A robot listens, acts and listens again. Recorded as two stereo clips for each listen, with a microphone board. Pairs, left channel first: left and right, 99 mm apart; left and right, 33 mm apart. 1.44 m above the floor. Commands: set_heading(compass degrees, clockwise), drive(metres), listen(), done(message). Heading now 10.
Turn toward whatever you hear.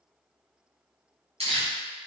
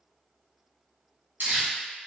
set_heading(100)
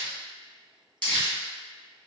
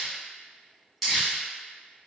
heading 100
set_heading(90)
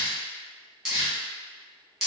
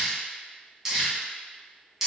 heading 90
done("Found it: crumpling, straight ahead.")